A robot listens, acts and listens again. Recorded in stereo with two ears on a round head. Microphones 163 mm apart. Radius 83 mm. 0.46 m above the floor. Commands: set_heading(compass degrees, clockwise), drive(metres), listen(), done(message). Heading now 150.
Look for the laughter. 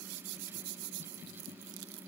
listen()
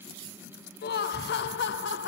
set_heading(85)
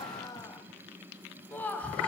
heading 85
done("Found it: laughter, straight ahead, 2 to 4 m away.")